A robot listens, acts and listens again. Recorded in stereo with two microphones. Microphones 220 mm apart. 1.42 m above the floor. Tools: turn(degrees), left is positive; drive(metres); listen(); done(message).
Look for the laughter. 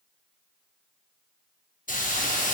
listen()
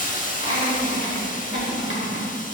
turn(degrees=50)
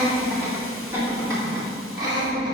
turn(degrees=-20)
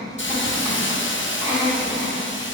done("Facing the laughter.")